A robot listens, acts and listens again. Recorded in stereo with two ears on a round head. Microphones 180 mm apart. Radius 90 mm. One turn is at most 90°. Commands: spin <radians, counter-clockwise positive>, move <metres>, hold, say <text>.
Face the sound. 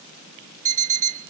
spin -0.61
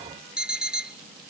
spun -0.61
say Facing the alarm clock.